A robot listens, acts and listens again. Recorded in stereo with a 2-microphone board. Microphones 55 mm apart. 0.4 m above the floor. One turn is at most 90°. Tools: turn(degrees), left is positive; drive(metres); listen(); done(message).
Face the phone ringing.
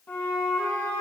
listen()
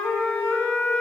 listen()
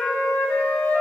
done("I can't make out a phone ringing to turn to.")